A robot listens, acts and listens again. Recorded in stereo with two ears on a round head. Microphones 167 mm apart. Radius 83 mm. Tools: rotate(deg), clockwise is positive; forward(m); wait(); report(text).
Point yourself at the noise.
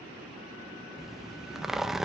rotate(-30)
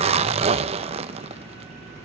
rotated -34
rotate(35)
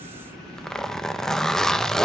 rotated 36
report("Facing the zipper.")